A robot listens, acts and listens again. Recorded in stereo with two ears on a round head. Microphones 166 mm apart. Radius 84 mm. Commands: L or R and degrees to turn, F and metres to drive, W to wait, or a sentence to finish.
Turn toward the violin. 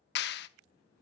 W
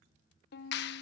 L55
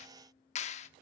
W
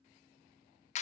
W
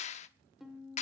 Found it: a violin, straight ahead.